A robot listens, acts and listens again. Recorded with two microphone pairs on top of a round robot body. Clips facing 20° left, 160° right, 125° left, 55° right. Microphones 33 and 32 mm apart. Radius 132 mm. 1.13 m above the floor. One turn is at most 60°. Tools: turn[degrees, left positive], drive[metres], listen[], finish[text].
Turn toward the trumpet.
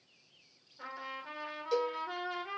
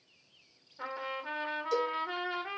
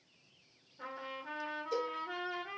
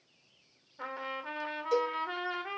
Thought: The trumpet: 100° right.
Action: turn[-60]
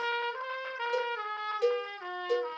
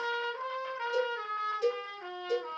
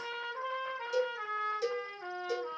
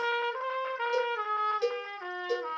Thought: The trumpet is now 45° right.
Action: turn[-45]
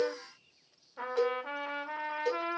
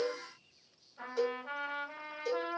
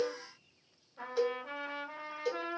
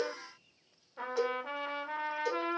Action: finish[Facing the trumpet, under 1 m away.]